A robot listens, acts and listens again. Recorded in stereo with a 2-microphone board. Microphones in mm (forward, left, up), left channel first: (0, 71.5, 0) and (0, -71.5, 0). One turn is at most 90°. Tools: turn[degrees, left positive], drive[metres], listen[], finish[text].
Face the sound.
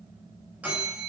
Action: turn[-30]
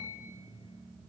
Thought: So it is at 140° right.
Action: turn[-90]
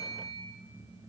Thought: The bell is now 75° right.
Action: turn[-75]
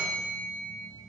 Thought: The bell is now 10° left.
Action: turn[10]
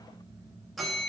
Action: finish[Found it: a bell, straight ahead, 2 to 4 m away.]